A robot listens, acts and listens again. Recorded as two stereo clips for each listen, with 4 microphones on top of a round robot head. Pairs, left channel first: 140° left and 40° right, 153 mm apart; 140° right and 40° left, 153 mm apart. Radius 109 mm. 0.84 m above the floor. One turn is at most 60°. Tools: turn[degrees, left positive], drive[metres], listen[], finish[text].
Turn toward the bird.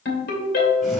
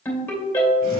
Action: listen[]
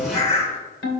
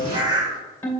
Thought: The bird: 100° left.
Action: turn[60]
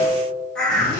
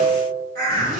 Thought: The bird is now 55° left.
Action: turn[55]
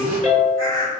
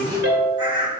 Thought: The bird is now 20° right.
Action: turn[-20]
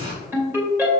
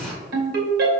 Action: listen[]
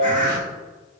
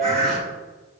Action: finish[Found it: a bird, straight ahead, 1 to 2 m away.]